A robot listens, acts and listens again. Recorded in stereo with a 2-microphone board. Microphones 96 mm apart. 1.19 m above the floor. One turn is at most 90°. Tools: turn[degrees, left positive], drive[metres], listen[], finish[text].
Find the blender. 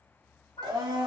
Thought: The blender: about 50° right or 130° right.
Action: turn[-50]
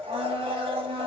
Thought: So it is at 80° right.
Action: turn[-80]
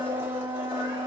Thought: The blender is now 25° right.
Action: turn[-25]
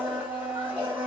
Thought: The blender is now 15° right.
Action: turn[-15]
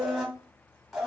Action: finish[Facing the blender, under 1 m away.]